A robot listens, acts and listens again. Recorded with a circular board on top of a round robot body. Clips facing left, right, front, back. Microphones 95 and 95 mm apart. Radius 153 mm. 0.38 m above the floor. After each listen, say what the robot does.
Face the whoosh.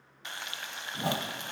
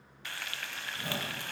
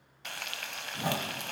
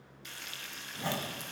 Turn 75° left.
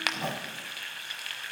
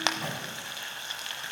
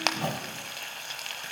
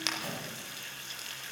Turn 30° left.
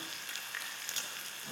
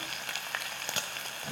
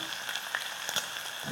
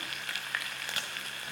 Keep listening.
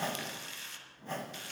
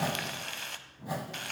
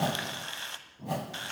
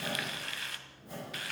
Turn 10° right.
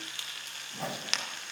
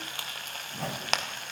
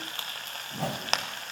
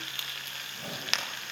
Found it: a whoosh, straight ahead.